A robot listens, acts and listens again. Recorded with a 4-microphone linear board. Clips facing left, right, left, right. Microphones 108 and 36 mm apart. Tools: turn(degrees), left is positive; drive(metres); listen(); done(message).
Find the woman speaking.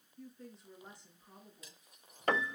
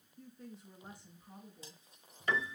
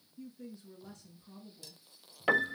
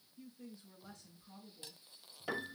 turn(degrees=-30)
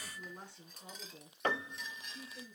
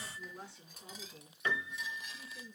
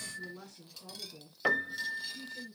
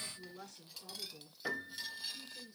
done("Facing the woman speaking, 2 to 4 m away.")